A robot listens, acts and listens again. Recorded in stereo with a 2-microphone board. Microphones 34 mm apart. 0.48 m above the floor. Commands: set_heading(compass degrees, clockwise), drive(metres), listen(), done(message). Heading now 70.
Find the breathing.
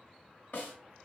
listen()
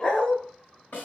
listen()
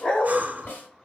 set_heading(125)
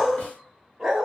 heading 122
listen()
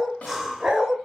done("Facing the breathing.")